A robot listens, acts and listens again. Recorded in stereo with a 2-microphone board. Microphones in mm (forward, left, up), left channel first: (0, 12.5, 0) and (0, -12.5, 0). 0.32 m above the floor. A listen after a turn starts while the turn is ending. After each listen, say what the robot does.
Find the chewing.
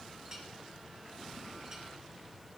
Keep listening.
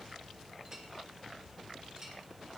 Keep listening.
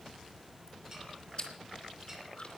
Turn 50° left.
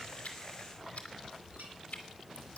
Turn 80° left.
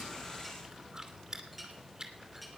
Turn 30° right.
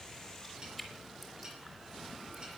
Found it: chewing, straight ahead.